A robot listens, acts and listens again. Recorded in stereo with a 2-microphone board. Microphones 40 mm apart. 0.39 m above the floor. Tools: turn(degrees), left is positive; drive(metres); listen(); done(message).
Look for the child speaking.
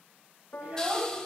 turn(degrees=-35)
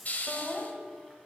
done("Found it: a child speaking, straight ahead, 2 to 4 m away.")